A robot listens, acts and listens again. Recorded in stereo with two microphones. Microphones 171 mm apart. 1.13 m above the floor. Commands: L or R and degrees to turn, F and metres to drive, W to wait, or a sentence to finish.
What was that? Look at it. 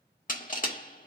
L50
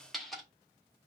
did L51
Facing the crushing.